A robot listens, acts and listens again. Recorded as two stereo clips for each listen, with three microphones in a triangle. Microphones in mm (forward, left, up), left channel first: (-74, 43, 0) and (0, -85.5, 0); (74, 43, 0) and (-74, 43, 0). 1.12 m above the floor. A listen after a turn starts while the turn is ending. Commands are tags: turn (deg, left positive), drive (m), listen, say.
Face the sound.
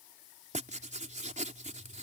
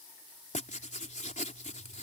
<turn deg="-30"/>
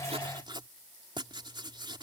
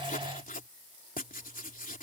<say>Found it: writing, straight ahead.</say>